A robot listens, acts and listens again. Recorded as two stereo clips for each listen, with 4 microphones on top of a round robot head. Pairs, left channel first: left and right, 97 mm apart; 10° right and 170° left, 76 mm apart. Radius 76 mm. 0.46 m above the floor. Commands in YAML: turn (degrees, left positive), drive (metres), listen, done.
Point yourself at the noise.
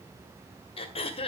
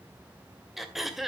turn: 85
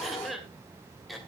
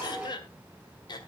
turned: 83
done: "Found it: throat clearing, straight ahead."